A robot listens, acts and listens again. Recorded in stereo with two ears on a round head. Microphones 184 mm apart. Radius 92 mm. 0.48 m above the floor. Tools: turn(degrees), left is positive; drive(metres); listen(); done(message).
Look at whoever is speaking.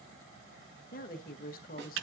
turn(degrees=45)
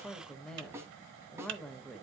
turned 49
done("Facing the woman speaking, 1 to 2 m away.")